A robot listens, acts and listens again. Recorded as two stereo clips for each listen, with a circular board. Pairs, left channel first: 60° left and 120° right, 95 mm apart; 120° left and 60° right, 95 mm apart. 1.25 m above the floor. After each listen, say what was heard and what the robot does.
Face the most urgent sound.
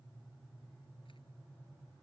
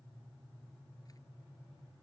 Keep listening.
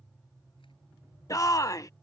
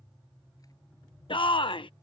The shout: 110° left. Turn 110° left.
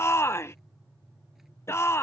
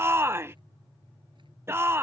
Found it: a shout, straight ahead.